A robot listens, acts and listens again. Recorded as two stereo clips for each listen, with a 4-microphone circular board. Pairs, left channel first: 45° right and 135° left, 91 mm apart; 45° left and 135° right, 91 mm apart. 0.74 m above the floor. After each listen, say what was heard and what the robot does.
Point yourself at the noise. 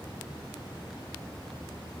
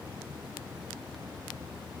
Keep listening.
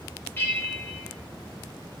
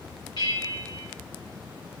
The bell: 20° left. Turn 20° left.
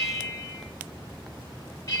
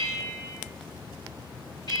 Facing the bell.